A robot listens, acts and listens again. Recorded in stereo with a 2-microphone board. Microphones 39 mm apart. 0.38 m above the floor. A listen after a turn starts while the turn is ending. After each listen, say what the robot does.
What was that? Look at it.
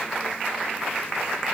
Keep listening.
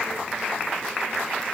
Keep listening.
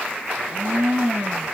Turn 50° right.
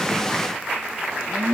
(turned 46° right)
Turn 80° right.
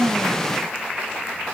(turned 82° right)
Keep listening.
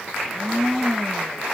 Facing the blender, 2 to 4 m away.